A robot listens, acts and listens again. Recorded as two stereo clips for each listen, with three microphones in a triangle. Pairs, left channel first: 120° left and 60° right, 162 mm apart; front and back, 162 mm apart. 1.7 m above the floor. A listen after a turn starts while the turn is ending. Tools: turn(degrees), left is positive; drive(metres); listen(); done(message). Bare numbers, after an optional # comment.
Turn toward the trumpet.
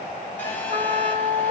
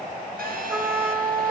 # The trumpet: 100° right.
turn(-100)
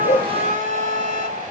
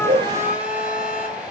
# The trumpet is now 40° right.
turn(-40)
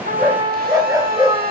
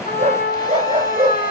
done("Found it: a trumpet, straight ahead, 2 to 4 m away.")